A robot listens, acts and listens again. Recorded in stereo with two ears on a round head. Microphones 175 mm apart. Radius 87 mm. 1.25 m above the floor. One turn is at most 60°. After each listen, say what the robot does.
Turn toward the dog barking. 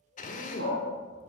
Turn 60° right.
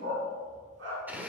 Turn 60° right.
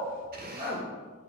Turn 20° right.
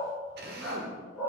Found it: a dog barking, straight ahead.